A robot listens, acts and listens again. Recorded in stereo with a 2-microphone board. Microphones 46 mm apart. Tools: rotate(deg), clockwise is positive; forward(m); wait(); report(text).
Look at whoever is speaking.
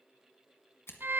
wait()
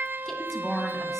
rotate(-30)
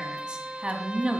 rotate(25)
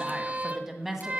rotate(15)
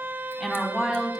report("Found it: a woman speaking, straight ahead, 2 to 4 m away.")